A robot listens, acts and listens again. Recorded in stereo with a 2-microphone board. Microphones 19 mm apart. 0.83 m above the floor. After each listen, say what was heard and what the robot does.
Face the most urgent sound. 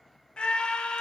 The scream: about 60° left or 120° left. Turn 60° left.
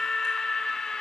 So it is at 40° left. Turn 40° left.
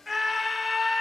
The scream is now 10° right. Turn 10° right.
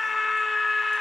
Facing the scream, under 1 m away.